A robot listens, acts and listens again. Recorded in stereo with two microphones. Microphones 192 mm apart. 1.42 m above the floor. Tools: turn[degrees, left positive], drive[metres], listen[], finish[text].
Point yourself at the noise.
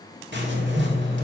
Thought: The writing: about 70° right or 110° right.
Action: turn[-70]
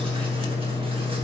Thought: So it is at 30° right.
Action: turn[-30]
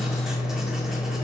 Action: finish[Found it: writing, straight ahead, 2 to 4 m away.]